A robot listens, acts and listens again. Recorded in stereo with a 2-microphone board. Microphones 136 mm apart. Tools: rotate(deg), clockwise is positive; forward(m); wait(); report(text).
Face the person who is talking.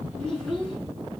rotate(-30)
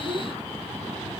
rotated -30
rotate(25)
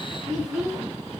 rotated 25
report("Facing the child speaking, over 4 m away.")